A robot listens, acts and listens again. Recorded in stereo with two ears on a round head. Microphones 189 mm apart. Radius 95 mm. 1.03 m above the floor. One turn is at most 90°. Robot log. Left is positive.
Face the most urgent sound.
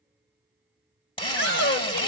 note: The shout: about 60° left or 120° left.
cmd yaw +60
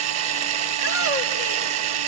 cmd idle
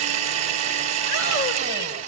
cmd idle
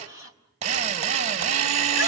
end: I heard a shout, but can't make it out now. It was about straight ahead or 60° left.